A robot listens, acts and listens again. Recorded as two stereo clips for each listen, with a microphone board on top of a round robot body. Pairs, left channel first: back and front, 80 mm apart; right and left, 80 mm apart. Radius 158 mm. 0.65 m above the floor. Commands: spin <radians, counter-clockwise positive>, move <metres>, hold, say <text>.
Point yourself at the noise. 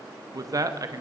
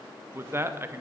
spin 0.61
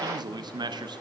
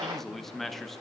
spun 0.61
say Found it: a man speaking, straight ahead, 1 to 2 m away.